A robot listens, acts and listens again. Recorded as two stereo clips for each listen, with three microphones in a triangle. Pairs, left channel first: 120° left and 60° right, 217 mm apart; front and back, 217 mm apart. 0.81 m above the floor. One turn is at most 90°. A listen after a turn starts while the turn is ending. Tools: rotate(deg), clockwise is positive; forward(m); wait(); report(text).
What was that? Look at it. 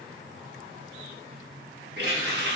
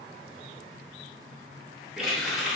rotate(90)
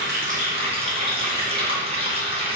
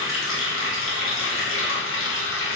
report("Found it: a running tap, straight ahead.")